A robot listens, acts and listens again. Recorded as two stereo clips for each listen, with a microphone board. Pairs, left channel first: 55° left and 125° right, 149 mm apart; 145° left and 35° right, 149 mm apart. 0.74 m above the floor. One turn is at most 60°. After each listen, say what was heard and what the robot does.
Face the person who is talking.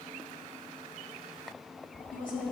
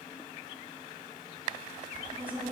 The woman speaking: 40° left. Turn 40° left.
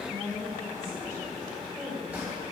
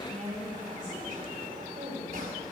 The woman speaking is now 15° right. Turn 15° right.
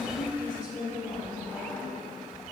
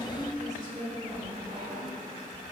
Facing the woman speaking.